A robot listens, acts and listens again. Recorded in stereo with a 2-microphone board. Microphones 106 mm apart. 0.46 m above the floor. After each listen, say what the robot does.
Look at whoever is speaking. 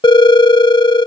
Keep listening.
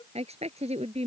Turn 90° right.
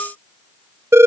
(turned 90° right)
Keep listening.
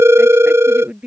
Turn 10° right.
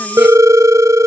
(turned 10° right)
Keep listening.
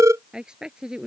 Facing the woman speaking.